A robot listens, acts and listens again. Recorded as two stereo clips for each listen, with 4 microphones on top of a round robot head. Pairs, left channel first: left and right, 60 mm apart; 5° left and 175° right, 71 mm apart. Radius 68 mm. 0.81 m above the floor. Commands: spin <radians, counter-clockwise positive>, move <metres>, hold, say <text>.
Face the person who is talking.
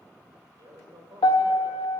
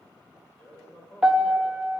spin -1.40
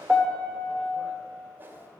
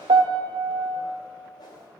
hold
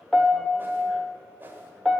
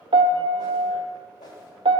hold
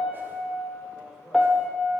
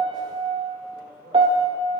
say Facing the man speaking, 2 to 4 m away.